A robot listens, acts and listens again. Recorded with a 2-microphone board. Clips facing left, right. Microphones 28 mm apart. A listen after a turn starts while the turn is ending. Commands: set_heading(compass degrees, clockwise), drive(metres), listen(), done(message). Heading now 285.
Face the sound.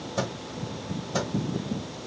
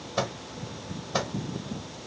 set_heading(310)
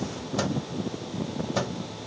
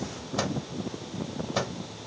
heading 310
done("Facing the microwave, 1 to 2 m away.")